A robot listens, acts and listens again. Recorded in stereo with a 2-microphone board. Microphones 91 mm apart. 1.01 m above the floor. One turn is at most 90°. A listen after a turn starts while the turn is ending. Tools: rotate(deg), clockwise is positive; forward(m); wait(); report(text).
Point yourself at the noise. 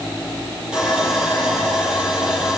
rotate(30)
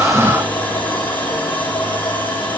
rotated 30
rotate(-20)
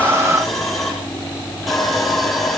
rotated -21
report("Found it: sawing, straight ahead, over 4 m away.")